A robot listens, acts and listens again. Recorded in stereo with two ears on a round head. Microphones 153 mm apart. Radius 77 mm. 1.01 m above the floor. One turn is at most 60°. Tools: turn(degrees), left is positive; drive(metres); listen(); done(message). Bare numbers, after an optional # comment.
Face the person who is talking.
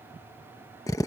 listen()
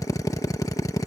listen()
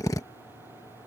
done("I can't make out anyone speaking to turn to.")